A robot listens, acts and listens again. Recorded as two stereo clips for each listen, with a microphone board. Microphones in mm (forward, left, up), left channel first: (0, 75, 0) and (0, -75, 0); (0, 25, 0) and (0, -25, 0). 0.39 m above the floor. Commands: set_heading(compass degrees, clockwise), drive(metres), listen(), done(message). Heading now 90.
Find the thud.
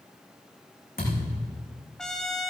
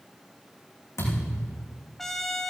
set_heading(0)
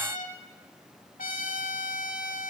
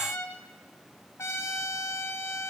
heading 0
done("Facing where the thud came from. I can't hear it now.")